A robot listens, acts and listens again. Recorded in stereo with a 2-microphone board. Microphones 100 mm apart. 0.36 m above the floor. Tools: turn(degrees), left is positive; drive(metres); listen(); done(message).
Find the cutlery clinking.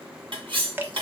turn(degrees=-60)
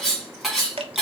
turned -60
done("Found it: cutlery clinking, straight ahead.")